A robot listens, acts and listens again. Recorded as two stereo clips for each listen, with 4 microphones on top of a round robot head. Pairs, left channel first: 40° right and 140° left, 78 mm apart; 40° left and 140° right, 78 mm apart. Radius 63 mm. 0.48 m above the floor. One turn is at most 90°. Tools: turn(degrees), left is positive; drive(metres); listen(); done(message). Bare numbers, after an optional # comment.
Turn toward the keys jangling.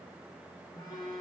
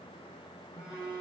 listen()
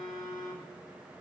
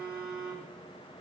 listen()
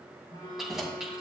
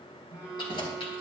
# The keys jangling: 60° left.
turn(60)
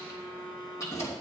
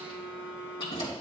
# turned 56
# The keys jangling is now 15° left.
turn(15)
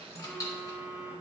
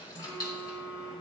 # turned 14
done("Facing the keys jangling, 2 to 4 m away.")